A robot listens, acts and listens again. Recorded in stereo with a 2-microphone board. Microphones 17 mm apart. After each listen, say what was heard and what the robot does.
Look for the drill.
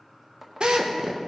The drill: about 65° right or 115° right. Turn 65° right.
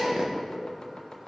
So it is at 50° right. Turn 50° right.
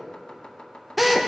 Facing the drill, 1 to 2 m away.